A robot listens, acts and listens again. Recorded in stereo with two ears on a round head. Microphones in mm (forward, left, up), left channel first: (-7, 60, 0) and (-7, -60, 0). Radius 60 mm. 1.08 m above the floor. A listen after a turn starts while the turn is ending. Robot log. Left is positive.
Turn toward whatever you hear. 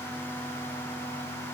cmd idle
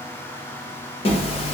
note: The zipper: about 45° left or 135° left.
cmd yaw +45
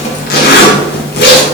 note: So it is at 90° left.
cmd yaw +90
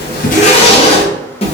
note: The zipper is now 45° left.
cmd yaw +45
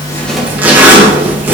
note: The zipper is now 15° right.
cmd yaw -15
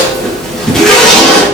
end: Found it: a zipper, straight ahead.